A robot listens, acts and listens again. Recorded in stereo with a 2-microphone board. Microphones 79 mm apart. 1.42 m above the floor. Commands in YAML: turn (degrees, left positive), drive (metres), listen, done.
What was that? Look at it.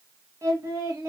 turn: -40
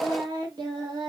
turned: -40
turn: -100
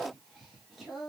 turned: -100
done: "Found it: singing, straight ahead."